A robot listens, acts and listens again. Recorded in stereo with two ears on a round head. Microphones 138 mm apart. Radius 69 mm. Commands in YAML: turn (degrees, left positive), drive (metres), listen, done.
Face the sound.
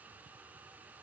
listen: true
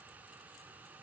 listen: true
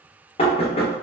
turn: 40
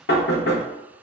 turn: 100
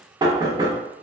turn: -25
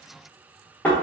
turn: 10
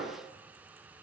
done: "Found it: knocking, straight ahead."